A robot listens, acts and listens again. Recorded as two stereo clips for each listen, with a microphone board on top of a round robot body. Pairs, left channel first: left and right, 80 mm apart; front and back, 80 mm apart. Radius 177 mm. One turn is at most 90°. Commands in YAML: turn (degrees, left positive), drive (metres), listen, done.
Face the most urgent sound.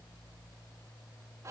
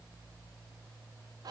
listen: true
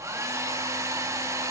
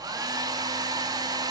listen: true
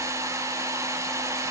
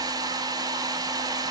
done: "I can't make out anything urgent, only a hair dryer."